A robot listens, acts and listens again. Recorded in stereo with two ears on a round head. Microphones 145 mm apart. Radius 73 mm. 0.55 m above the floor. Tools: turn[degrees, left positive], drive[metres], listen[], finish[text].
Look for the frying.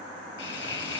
Action: turn[90]
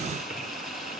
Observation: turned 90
Action: finish[Facing the frying, 2 to 4 m away.]